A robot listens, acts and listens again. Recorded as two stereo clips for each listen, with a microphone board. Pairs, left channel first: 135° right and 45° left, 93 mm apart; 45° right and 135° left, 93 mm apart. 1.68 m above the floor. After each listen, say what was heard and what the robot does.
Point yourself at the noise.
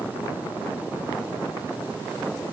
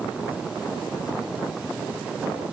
Keep listening.
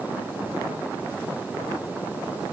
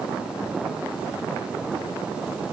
Keep listening.
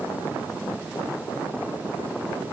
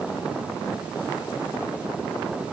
I can't make out anything to turn to.